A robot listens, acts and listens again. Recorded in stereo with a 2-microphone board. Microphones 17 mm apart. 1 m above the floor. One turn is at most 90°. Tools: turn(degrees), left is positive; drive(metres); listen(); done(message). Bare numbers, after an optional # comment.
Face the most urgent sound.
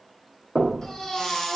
# The baby crying: about 40° left or 140° left.
turn(40)
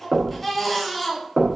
done("Found it: a baby crying, straight ahead.")